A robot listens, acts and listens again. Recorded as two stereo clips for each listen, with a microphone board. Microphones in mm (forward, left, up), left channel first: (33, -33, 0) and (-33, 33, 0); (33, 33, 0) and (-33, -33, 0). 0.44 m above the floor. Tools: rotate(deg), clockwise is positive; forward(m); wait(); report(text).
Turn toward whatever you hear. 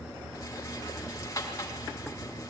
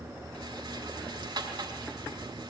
rotate(100)
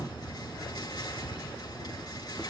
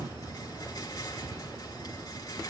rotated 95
report("Found it: a rattle, straight ahead.")